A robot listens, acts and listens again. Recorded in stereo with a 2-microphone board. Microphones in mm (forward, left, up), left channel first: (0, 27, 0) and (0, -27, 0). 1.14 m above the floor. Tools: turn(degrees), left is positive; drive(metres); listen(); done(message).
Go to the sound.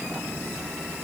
listen()
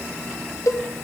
turn(degrees=90)
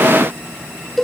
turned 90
drive(metres=1.0)
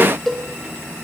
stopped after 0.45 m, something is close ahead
done("Something is in my way. I am facing the cowbell but have not reached it.")